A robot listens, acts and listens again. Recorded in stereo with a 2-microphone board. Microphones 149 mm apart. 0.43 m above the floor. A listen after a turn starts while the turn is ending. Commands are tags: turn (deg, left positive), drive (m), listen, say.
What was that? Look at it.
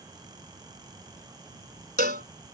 <turn deg="-90"/>
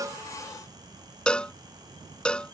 <say>Facing the cowbell.</say>